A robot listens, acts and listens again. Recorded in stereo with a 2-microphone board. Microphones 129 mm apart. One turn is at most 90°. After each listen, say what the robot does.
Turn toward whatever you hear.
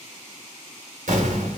Turn 90° right.
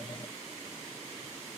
Facing where the explosion came from. I can't hear it now.